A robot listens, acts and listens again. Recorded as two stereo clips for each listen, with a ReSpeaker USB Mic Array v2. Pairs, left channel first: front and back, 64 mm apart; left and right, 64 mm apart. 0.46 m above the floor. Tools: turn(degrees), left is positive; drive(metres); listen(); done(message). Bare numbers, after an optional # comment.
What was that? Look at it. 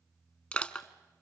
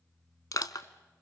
# The crushing: 70° left.
turn(70)
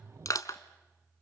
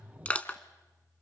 # The crushing is now 20° left.
turn(20)
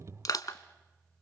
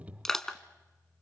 done("Found it: crushing, straight ahead.")